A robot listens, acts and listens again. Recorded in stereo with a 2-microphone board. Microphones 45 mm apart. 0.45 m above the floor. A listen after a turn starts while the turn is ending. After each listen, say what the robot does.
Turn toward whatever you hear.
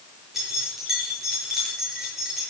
Turn 30° right.
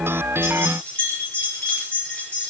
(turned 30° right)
Turn 25° left.
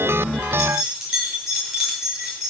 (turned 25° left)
Turn 10° right.
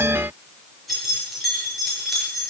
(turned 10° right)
Found it: keys jangling, straight ahead, over 4 m away.